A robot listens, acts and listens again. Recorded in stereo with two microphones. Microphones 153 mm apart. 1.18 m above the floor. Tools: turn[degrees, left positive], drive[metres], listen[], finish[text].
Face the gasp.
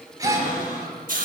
Thought: The gasp: about 25° right or 155° right.
Action: turn[-25]
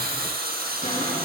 Action: listen[]
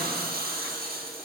Action: finish[I heard a gasp, but can't make it out now. It was about straight ahead or 130° right.]